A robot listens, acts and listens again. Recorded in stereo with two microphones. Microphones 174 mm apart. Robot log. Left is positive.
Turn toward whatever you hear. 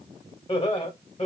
note: The laughter: about 40° left or 140° left.
cmd yaw +40
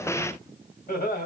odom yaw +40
note: So it is at 110° left.
cmd yaw +110
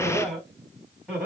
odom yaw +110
end: Found it: laughter, straight ahead.